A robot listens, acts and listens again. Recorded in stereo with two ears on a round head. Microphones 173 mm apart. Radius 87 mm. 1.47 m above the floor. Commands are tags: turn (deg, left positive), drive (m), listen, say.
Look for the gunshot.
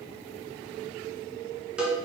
<listen/>
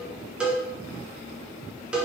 <listen/>
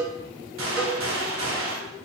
<turn deg="-75"/>
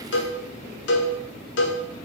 <listen/>
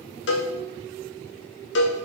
<say>I heard a gunshot, but can't make it out now. It was about straight ahead or 30° right.</say>